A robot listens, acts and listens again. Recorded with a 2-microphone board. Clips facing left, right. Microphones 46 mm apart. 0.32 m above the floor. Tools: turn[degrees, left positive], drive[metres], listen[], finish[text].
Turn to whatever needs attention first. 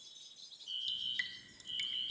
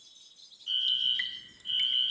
Thought: The fire alarm: about 70° right or 110° right.
Action: turn[-70]
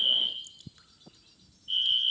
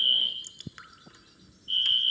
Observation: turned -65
Thought: So it is at 15° right.
Action: turn[-15]
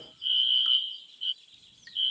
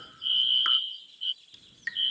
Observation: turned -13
Action: finish[Found it: a fire alarm, straight ahead.]